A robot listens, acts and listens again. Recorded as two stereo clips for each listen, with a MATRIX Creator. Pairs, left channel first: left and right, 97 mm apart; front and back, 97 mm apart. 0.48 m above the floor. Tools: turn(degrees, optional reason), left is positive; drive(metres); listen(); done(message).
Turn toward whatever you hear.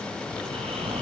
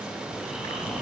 turn(degrees=-95, reason="The snoring: 95° right.")
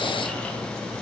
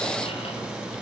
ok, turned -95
listen()
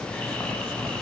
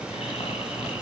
turn(degrees=15, reason="The snoring is now 15° left.")
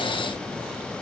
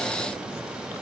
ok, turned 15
listen()
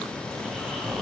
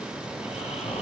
done("Found it: snoring, straight ahead, 2 to 4 m away.")